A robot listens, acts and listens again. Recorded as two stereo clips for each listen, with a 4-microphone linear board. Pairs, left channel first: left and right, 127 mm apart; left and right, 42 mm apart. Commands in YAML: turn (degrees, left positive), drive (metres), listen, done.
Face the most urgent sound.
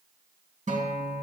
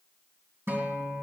listen: true
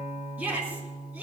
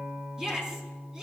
turn: -30
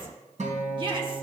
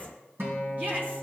turn: -140
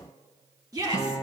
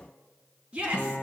turn: -30
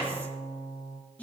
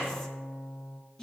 turn: 15
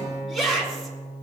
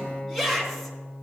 done: "Facing the shout."